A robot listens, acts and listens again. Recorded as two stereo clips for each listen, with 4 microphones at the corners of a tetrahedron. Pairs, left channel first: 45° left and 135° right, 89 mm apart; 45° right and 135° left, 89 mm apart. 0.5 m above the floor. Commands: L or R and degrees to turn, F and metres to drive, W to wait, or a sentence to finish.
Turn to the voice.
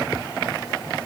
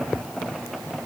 W
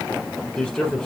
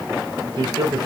L120
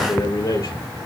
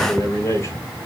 Found it: a man speaking, straight ahead.